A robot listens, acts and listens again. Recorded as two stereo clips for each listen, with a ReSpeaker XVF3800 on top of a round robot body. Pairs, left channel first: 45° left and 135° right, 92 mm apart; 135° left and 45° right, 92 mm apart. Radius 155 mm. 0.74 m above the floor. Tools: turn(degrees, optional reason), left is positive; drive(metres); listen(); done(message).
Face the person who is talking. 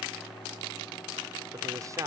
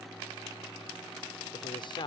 turn(degrees=170, reason="The man speaking: 170° left.")
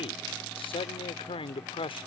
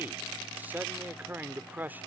turn(degrees=25, reason="The man speaking is now 25° left.")
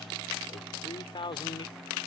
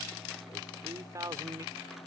turn(degrees=10, reason="The man speaking is now 10° left.")
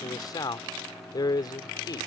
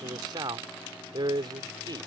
done("Found it: a man speaking, straight ahead.")